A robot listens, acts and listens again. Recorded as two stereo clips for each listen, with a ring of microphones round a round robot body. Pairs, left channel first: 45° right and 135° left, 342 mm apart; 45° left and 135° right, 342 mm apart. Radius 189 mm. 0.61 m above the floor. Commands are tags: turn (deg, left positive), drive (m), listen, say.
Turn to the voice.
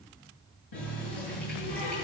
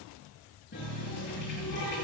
<listen/>
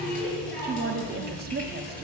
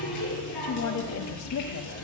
<turn deg="75"/>
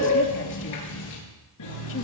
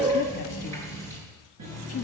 <say>Facing the woman speaking.</say>